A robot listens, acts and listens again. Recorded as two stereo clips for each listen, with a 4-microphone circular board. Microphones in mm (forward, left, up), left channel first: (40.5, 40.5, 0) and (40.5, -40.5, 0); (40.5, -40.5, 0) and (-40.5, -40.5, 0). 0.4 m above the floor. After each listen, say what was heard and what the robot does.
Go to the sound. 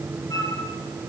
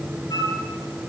The flute: 45° left. Turn 45° left.
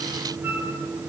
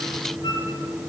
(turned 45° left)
The flute is now 25° right. Turn 25° right.
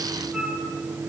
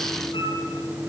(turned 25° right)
The flute is now 10° right. Turn 10° right.
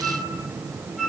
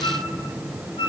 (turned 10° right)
Drive 1.0 m forward.
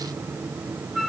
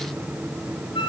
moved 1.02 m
Drive 1.0 m forward.
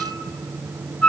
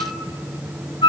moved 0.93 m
The flute is now 15° left. Turn 15° left.
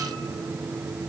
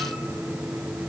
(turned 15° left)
Keep listening.
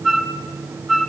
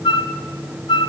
Drive 1.0 m forward.
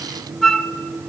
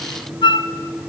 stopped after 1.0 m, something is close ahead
Arrived at the flute, straight ahead.